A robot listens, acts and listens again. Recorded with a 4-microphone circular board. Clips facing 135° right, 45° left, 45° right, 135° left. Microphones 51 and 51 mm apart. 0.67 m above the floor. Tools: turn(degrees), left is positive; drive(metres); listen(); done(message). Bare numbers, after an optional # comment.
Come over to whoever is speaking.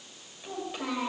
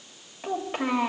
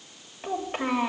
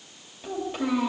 drive(1.0)
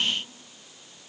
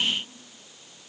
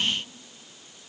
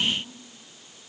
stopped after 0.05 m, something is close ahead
listen()
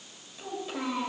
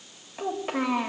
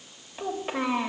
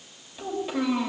done("Something is in my way. I am facing the child speaking but have not reached it.")